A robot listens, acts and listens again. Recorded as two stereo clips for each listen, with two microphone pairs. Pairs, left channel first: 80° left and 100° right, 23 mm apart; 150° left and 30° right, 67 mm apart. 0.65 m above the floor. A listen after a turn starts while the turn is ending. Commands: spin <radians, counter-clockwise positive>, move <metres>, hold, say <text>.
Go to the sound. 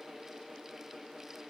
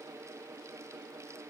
hold
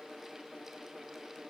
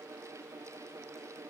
hold
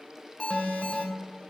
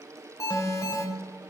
spin 2.09
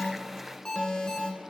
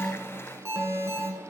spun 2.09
spin 0.35
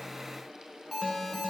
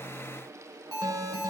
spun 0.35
move 1.0
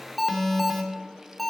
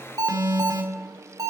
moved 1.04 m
move 1.0
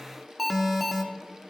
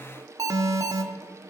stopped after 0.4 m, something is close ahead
spin -0.17
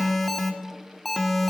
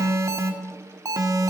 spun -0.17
say Arrived at the alarm, straight ahead.